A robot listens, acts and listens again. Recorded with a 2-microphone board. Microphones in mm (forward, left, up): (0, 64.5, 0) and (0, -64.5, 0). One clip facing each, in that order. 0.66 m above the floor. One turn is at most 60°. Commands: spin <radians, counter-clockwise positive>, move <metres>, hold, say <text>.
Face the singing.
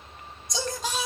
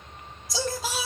spin -0.52
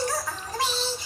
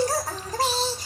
spin -1.05
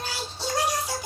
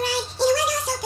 spin -1.05
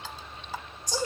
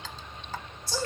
spin 0.26
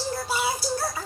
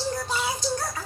say Found it: singing, straight ahead, 1 to 2 m away.